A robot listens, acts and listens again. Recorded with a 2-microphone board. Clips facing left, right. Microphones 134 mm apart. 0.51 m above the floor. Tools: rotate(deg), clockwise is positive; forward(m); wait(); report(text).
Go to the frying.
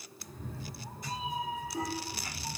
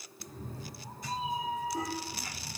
wait()
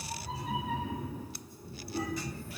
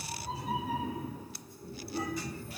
wait()
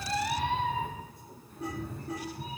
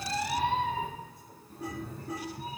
report("I can't make out frying, only a cat meowing.")